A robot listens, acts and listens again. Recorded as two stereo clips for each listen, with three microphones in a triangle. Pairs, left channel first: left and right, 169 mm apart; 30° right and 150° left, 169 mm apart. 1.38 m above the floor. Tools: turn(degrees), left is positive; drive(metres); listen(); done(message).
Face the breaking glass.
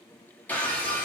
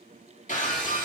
turn(degrees=10)
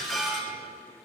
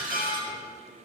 done("Found it: breaking glass, straight ahead.")